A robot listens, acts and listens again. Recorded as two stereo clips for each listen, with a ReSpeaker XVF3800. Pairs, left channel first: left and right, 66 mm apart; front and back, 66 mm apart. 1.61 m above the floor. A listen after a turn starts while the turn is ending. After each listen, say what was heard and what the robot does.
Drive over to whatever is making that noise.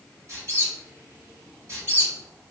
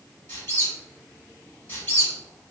The squeak: 50° right. Turn 50° right.
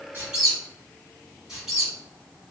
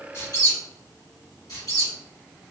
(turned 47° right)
Drive 1.0 m forward.
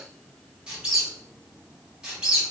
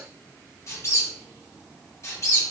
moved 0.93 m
The squeak is now 15° right. Turn 15° right.
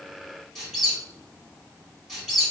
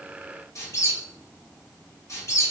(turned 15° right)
Drive 1.0 m forward.
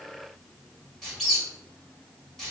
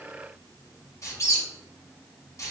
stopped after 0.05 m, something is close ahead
I am next to the squeak.